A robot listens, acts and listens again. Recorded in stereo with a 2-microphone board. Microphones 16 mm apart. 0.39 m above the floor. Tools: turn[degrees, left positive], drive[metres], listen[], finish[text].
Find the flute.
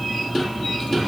Action: listen[]
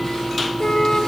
Action: turn[90]
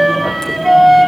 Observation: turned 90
Thought: So it is at 10° right.
Action: turn[-10]
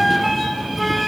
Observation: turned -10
Action: finish[Facing the flute.]